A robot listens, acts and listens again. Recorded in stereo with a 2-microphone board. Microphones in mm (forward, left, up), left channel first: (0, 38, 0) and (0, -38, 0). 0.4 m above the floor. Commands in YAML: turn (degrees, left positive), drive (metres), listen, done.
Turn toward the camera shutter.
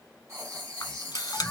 turn: 55
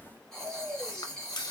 turn: 65
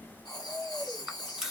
done: "Facing the camera shutter, under 1 m away."